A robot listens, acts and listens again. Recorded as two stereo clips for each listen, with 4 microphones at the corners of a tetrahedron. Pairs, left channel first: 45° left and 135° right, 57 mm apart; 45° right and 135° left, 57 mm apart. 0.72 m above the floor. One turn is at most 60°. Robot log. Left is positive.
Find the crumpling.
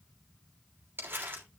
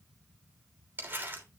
note: The crumpling: 175° right.
cmd yaw -60
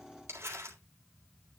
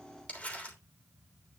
note: The crumpling is now 105° right.
cmd yaw -60
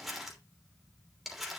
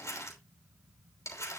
note: The crumpling is now 50° right.
cmd yaw -50
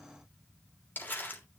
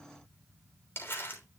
end: Facing the crumpling.